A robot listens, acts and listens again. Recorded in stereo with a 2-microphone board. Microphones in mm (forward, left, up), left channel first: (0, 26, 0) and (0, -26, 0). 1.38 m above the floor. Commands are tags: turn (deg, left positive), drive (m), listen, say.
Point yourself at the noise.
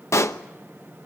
<turn deg="70"/>
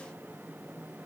<listen/>
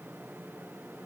<say>I heard a pop, but can't make it out now. It was about straight ahead or 40° left.</say>